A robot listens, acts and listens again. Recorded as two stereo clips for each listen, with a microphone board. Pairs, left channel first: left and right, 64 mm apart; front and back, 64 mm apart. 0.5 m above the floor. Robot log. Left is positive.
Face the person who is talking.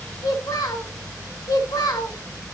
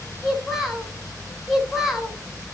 note: The child speaking: 95° left.
cmd yaw +95
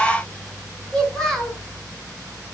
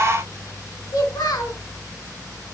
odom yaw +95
end: Facing the child speaking.